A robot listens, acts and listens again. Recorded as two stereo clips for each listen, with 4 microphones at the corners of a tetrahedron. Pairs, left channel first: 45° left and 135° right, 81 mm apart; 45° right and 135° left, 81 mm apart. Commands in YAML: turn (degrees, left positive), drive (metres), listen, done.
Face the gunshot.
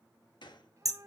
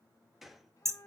turn: 45
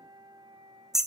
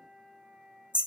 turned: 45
done: "Facing where the gunshot came from. I can't hear it now."